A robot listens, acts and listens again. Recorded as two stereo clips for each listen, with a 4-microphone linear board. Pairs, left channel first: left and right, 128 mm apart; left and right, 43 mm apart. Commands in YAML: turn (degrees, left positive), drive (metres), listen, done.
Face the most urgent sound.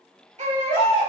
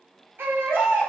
turn: -70
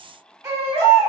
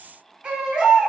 turn: -25
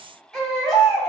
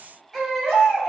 done: "Facing the baby crying."